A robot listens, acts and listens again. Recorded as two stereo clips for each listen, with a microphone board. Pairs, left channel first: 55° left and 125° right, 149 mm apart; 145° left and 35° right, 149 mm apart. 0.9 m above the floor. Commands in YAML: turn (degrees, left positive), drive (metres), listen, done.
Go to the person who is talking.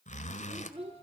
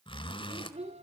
turn: -75
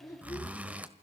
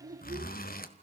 turn: -15
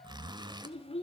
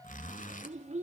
drive: 1.0
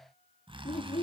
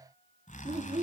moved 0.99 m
turn: 15
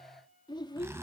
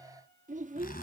drive: 1.0
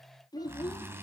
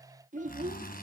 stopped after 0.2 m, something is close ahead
done: "I am next to the child speaking."